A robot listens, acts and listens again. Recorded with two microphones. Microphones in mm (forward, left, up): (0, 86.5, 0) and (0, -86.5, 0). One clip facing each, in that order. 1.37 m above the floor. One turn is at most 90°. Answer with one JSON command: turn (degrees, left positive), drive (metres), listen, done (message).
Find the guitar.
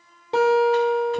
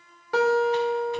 {"turn": 25}
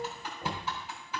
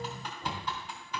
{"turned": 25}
{"listen": true}
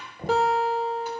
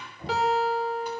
{"turn": 90}
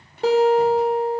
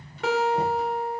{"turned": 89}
{"turn": 35}
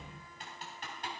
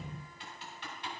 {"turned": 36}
{"listen": true}
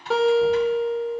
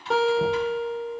{"done": "Facing the guitar, 1 to 2 m away."}